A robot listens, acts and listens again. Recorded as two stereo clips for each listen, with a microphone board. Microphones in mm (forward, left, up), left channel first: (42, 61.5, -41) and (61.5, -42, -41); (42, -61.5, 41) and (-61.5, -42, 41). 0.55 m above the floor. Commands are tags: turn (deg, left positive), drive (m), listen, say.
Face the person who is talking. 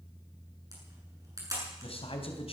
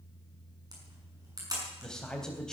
<turn deg="75"/>
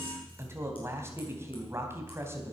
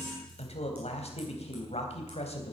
<turn deg="-15"/>
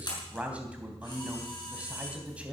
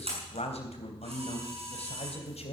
<say>Found it: a man speaking, straight ahead.</say>